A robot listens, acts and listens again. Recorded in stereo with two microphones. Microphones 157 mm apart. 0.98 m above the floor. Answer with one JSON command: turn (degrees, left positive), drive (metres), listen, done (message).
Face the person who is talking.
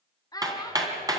{"turn": 25}
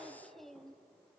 {"done": "Found it: a child speaking, straight ahead, under 1 m away."}